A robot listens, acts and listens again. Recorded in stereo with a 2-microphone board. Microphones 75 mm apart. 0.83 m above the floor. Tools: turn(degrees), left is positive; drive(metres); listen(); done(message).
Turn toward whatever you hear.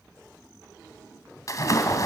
turn(degrees=45)
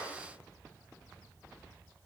listen()
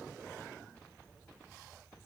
done("I heard a splash, but can't make it out now. It was about straight ahead or 90° left.")